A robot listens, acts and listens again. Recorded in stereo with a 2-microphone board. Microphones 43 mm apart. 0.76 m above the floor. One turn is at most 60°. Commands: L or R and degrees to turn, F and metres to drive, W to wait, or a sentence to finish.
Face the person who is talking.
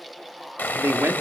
R60
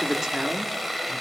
R10
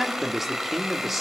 Facing the man speaking.